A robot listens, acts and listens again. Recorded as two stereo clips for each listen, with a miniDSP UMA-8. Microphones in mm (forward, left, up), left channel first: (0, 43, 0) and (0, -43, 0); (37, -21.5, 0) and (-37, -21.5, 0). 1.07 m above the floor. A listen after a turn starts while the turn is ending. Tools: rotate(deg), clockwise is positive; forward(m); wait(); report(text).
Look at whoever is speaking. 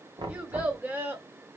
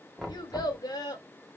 rotate(30)
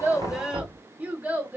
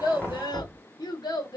rotate(25)
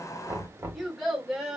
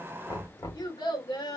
report("Facing the child speaking, 1 to 2 m away.")